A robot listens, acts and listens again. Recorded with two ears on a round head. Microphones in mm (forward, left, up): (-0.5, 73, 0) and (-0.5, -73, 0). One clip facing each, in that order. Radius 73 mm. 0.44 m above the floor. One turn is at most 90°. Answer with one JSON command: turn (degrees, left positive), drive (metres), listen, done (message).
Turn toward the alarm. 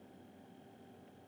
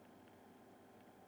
{"listen": true}
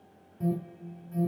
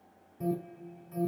{"turn": -30}
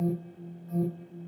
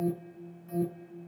{"turn": -90}
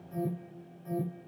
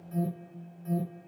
{"turn": -35}
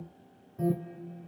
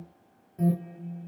{"turn": -25}
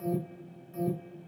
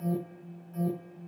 {"turn": 15}
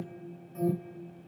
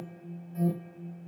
{"done": "Facing the alarm, 2 to 4 m away."}